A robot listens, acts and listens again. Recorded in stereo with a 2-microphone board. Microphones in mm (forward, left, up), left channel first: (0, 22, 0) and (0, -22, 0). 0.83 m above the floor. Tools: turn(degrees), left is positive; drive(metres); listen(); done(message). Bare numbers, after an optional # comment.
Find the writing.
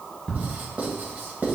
# The writing: about 45° right or 135° right.
turn(-45)
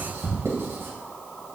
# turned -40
# So it is at 95° right.
turn(-95)
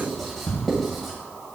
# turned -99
done("Facing the writing.")